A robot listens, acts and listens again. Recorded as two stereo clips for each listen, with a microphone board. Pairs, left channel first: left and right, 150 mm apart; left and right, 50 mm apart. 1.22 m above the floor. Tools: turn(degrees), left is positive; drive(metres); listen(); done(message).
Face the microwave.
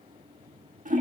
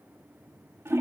listen()
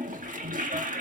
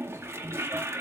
listen()
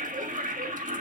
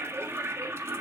done("I can't make out a microwave to turn to.")